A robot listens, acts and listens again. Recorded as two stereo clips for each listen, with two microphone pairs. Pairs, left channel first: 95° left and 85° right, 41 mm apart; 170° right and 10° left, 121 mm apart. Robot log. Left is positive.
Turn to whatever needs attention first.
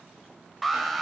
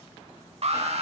end: Found it: an alarm, straight ahead, under 1 m away.